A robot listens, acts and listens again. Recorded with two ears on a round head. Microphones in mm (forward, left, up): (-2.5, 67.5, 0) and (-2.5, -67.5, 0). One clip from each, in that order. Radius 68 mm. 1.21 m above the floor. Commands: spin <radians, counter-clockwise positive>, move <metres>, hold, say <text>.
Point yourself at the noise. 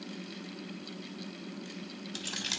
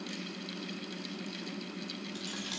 spin 0.87
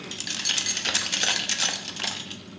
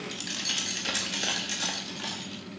spin 0.87
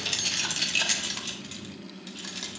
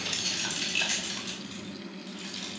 spin 0.52
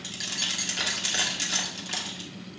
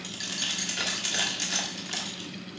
say Found it: keys jangling, straight ahead.